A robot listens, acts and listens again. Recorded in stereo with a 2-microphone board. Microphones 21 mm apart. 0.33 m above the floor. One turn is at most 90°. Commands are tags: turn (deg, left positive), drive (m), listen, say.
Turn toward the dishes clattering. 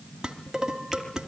<turn deg="-35"/>
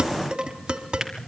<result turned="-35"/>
<turn deg="-90"/>
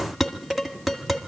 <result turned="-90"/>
<say>Found it: dishes clattering, straight ahead.</say>